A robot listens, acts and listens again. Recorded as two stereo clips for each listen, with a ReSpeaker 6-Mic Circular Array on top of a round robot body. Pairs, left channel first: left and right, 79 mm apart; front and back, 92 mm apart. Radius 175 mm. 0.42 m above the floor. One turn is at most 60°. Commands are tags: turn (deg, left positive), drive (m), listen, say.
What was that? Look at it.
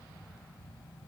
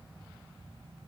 <listen/>
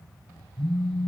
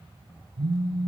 <turn deg="-60"/>
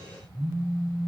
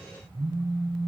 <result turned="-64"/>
<turn deg="-60"/>
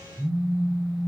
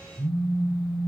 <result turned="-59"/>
<turn deg="-50"/>
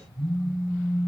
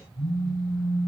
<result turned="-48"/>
<say>Found it: a phone buzzing, straight ahead, over 4 m away.</say>